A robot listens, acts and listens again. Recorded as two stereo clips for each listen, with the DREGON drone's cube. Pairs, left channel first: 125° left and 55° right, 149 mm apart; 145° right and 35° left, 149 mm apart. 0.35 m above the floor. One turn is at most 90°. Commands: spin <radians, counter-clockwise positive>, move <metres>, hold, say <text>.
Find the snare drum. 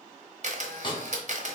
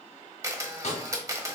spin 1.57
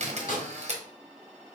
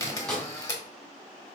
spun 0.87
spin 1.57
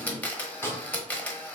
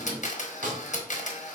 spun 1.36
spin 0.87
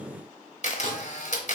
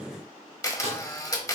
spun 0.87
say Found it: a snare drum, straight ahead.